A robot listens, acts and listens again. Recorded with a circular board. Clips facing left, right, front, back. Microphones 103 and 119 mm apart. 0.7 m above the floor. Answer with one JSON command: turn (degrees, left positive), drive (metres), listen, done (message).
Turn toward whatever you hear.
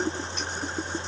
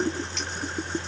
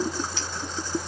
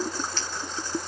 {"turn": -80}
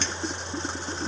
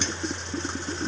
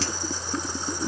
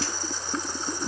{"listen": true}
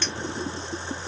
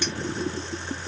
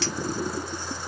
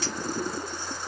{"listen": true}
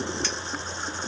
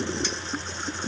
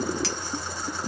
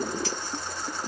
{"done": "I heard a clink from this way, but can't make it out now."}